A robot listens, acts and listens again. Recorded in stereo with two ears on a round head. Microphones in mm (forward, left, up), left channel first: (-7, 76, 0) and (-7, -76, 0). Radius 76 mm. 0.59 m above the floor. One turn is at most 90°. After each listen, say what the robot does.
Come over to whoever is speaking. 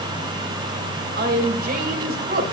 Turn 55° right.
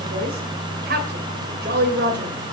Turn 60° right.
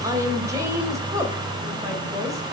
Keep listening.
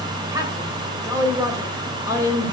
Turn 20° right.
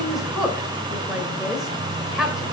Drive 1.0 m forward.
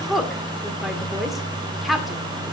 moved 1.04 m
Drive 1.0 m forward.
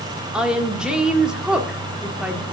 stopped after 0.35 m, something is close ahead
Arrived at the woman speaking, straight ahead.